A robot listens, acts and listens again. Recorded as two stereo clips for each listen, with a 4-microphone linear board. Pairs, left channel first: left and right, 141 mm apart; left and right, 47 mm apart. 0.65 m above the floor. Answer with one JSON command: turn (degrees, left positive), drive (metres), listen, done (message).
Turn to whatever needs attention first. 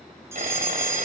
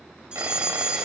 {"turn": -20}
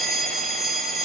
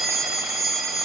{"done": "Found it: a fire alarm, straight ahead, over 4 m away."}